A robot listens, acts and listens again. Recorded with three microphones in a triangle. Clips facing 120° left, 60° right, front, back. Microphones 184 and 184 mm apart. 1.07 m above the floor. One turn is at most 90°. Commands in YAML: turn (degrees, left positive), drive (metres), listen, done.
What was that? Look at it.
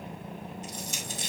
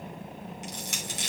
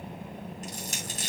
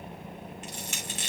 turn: -50
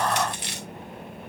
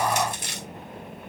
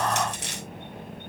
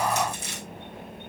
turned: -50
turn: -15
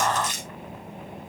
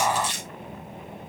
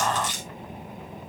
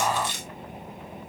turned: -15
done: "Found it: crushing, straight ahead, 2 to 4 m away."